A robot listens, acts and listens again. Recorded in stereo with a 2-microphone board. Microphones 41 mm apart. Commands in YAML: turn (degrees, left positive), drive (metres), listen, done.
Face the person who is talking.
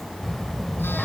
turn: 30
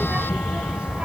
turn: -30
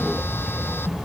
turn: -15
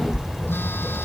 turn: -10
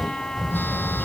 turn: -10
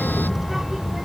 turn: -10
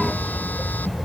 done: "Found it: a child speaking, straight ahead."